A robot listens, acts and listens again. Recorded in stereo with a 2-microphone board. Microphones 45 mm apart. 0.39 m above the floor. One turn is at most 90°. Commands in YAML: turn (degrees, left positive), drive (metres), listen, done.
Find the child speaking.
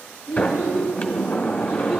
turn: -35
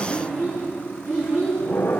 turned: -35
turn: -90
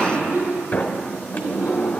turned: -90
turn: -45
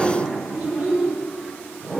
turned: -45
done: "Found it: a child speaking, straight ahead, over 4 m away."